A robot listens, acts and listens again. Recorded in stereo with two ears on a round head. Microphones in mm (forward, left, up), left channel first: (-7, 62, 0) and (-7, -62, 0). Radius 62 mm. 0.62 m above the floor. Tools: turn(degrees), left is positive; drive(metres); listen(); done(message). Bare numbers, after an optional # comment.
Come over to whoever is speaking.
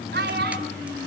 turn(-90)
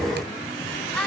drive(1.0)
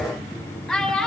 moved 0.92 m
drive(1.0)
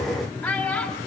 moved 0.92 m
drive(1.0)
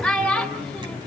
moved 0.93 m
drive(1.0)
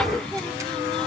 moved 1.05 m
listen()
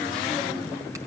listen()
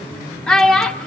drive(1.0)
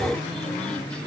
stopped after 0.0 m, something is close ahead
listen()
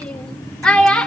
done("I am next to the child speaking.")